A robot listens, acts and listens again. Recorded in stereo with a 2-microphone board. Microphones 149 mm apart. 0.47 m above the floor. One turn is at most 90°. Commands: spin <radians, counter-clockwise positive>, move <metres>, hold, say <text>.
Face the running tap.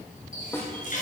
spin 1.05
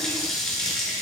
say Facing the running tap, over 4 m away.